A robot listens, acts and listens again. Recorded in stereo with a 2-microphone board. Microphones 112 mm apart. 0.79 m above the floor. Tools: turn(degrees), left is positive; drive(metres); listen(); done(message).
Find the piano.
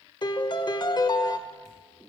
turn(degrees=40)
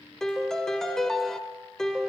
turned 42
done("Found it: a piano, straight ahead.")